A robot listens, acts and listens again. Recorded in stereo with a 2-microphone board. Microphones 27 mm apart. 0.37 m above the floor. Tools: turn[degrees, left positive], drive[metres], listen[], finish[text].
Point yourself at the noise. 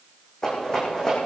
Thought: The rattle: about 20° left or 160° left.
Action: turn[20]
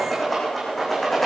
Action: finish[Facing the rattle.]